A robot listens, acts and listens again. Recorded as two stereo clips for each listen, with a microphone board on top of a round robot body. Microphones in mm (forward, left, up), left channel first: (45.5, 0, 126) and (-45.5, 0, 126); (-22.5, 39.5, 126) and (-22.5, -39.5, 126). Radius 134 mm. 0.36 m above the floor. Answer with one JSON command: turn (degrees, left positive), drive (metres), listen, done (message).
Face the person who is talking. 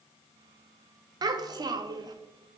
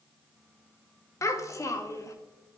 {"turn": 140}
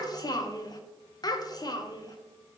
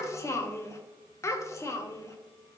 {"turn": 40}
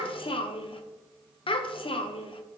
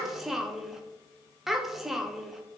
{"done": "Facing the child speaking, under 1 m away."}